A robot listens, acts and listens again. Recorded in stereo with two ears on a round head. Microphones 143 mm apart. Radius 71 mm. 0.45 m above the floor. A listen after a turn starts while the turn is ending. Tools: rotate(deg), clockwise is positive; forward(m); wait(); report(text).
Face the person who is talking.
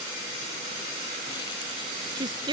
rotate(30)
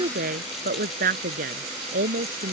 rotate(120)
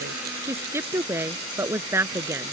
rotate(15)
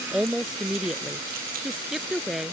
report("Found it: a woman speaking, straight ahead.")